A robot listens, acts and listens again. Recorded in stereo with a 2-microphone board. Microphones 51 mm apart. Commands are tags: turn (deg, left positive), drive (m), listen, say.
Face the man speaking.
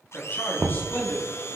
<turn deg="40"/>
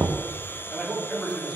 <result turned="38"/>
<say>Facing the man speaking, 2 to 4 m away.</say>